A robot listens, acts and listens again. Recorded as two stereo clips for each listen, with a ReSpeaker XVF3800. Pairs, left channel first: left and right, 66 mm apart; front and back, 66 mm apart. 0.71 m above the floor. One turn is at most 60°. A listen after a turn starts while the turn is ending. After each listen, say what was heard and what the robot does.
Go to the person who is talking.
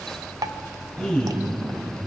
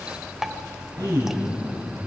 The man speaking: 165° left. Turn 60° left.
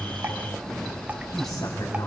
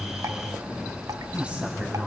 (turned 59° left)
The man speaking is now 110° left. Turn 60° left.
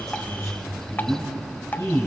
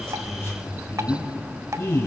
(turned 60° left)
The man speaking is now 50° left. Turn 50° left.
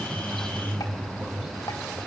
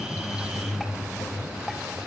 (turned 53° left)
Drive 1.0 m forward.
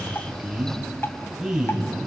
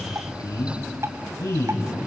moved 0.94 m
The man speaking is now 10° right. Turn 10° right.
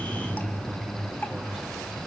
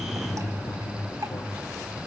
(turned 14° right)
Drive 1.0 m forward.
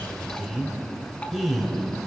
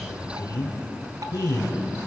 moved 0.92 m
Drive 1.0 m forward.
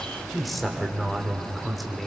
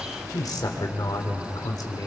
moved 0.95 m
Drive 1.0 m forward.
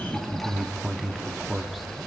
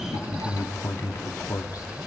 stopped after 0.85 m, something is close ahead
Arrived at the man speaking, straight ahead.